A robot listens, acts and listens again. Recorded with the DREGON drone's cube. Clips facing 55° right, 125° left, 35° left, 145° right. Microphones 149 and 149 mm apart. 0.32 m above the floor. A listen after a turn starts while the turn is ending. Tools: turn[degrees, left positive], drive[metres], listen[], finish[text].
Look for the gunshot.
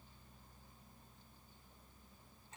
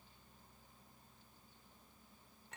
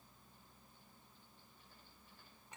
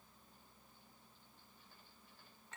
Action: listen[]
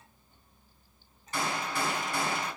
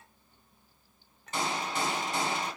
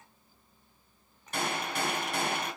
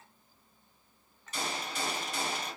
Thought: The gunshot: 55° left.
Action: turn[55]
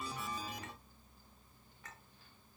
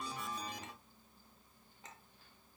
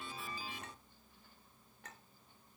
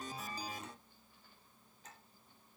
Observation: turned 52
Action: finish[Facing where the gunshot came from. I can't hear it now.]